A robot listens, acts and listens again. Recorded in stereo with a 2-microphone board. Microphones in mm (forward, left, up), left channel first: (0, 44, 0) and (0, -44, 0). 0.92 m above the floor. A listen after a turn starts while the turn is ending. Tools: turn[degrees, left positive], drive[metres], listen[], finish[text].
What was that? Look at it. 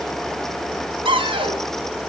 Action: turn[-90]
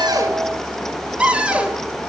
Thought: So it is at 10° right.
Action: turn[-10]
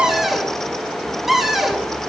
Action: finish[Facing the cupboard door.]